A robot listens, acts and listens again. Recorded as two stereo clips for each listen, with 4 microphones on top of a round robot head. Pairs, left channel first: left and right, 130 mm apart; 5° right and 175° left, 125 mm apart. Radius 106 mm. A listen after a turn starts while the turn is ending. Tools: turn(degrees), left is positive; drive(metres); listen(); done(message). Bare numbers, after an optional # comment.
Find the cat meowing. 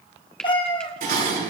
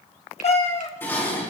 # The cat meowing: 25° left.
turn(25)
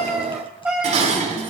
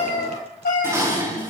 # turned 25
done("Facing the cat meowing.")